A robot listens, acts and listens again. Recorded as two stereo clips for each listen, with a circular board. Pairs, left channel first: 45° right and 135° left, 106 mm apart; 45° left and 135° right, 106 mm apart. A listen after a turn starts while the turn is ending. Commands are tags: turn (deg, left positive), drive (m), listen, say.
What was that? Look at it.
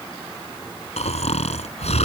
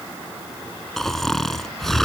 <turn deg="-40"/>
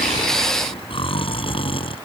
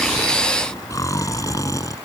<turn deg="-10"/>
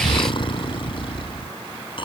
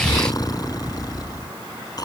<say>Found it: snoring, straight ahead.</say>